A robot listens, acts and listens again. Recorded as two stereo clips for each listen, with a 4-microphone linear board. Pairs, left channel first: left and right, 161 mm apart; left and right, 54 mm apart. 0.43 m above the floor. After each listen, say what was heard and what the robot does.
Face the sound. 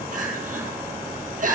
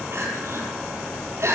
The crying: about 55° right or 125° right. Turn 55° right.
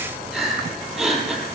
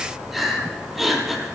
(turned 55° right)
Facing the crying.